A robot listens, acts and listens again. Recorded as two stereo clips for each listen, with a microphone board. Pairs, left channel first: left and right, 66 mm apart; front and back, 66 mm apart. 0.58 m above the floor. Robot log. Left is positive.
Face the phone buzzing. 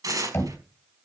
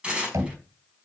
cmd idle
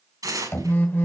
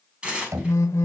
note: The phone buzzing: 35° left.
cmd yaw +35
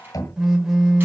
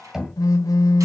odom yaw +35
end: Found it: a phone buzzing, straight ahead.